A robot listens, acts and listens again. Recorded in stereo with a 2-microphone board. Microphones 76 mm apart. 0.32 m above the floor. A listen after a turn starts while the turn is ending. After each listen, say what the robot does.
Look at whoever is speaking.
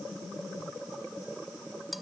Keep listening.
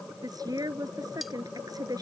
Turn 55° right.
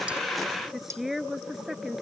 Found it: a woman speaking, straight ahead.